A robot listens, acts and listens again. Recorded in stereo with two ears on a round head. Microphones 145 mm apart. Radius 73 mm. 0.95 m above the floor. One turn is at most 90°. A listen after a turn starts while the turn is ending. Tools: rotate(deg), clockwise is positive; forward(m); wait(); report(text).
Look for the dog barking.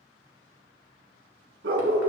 rotate(75)
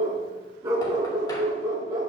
rotate(25)
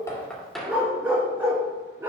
rotate(15)
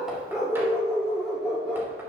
report("Found it: a dog barking, straight ahead.")